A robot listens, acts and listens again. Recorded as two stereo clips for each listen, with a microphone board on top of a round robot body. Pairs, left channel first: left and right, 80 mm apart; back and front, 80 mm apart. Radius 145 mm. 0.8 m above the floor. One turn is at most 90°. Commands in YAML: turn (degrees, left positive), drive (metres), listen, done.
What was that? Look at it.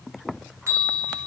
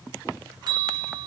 turn: -30
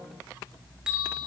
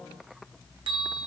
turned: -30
turn: -10
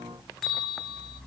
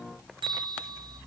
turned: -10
done: "Found it: a bell, straight ahead."